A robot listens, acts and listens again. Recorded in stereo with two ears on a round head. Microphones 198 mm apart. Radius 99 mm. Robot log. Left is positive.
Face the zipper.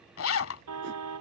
note: The zipper: about 65° left or 115° left.
cmd yaw +65
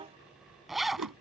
end: Facing the zipper.